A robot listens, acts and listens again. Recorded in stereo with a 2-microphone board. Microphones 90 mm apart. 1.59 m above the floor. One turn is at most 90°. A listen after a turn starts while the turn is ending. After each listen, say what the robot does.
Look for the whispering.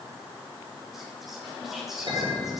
Turn 30° right.
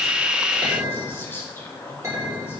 Turn 25° left.
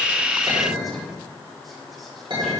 Keep listening.
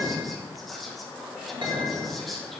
Facing the whispering.